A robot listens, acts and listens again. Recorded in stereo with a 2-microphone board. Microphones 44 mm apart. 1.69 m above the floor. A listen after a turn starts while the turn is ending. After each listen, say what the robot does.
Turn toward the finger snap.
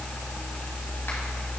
Keep listening.
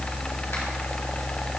Keep listening.
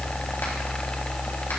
I can't make out a finger snap.